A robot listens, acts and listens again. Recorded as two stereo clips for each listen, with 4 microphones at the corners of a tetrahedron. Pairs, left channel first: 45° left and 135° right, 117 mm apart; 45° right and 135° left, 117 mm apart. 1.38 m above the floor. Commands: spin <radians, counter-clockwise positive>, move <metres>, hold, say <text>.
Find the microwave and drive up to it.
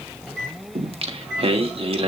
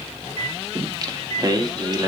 spin 2.36
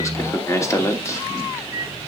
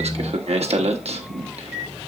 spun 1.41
spin 0.96
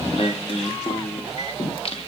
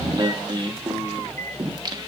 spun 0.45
spin 0.52
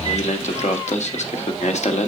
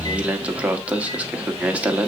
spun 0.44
hold
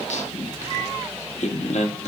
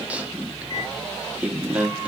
say Facing where the microwave came from. I can't hear it now. I did not reach it.